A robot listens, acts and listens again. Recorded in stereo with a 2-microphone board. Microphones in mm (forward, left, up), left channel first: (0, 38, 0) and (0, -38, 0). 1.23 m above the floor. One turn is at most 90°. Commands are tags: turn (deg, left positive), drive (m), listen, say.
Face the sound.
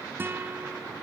<turn deg="-30"/>
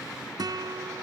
<turn deg="-90"/>
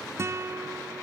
<turn deg="-35"/>
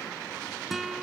<say>Found it: a guitar, straight ahead.</say>